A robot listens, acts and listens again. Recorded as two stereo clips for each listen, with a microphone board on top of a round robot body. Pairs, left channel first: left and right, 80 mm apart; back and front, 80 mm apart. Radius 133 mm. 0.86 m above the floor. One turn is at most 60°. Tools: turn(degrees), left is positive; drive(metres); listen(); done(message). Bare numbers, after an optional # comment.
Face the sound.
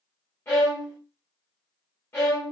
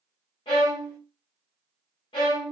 # The violin: 150° left.
turn(60)
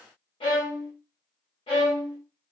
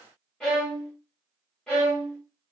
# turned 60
# The violin is now 95° left.
turn(60)
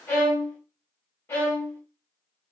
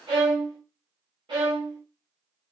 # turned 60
# The violin is now 30° left.
turn(30)
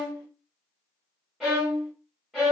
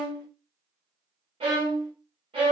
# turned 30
done("Facing the violin, 1 to 2 m away.")